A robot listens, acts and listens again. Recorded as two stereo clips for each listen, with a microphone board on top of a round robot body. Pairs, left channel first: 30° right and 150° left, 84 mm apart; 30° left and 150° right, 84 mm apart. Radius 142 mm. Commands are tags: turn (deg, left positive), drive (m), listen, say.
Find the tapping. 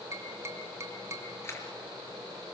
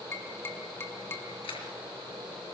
<turn deg="90"/>
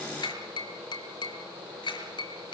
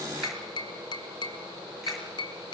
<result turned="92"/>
<say>Facing the tapping.</say>